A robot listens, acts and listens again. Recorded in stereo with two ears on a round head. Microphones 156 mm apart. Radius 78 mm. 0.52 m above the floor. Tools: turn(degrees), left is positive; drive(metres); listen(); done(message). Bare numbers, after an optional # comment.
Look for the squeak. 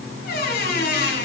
# The squeak: about 60° left or 120° left.
turn(60)
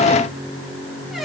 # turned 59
listen()
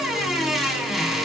done("Found it: a squeak, straight ahead.")